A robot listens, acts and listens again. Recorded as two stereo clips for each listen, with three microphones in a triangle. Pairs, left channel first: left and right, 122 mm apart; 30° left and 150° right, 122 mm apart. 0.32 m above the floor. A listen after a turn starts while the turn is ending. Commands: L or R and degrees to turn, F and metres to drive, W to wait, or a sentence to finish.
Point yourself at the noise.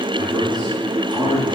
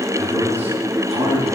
R140
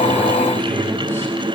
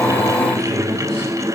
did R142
L20
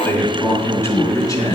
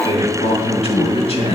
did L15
L35
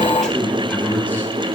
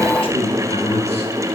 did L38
L15
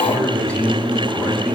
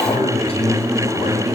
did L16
L10
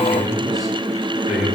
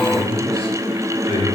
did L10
Found it: a man speaking, straight ahead, 2 to 4 m away.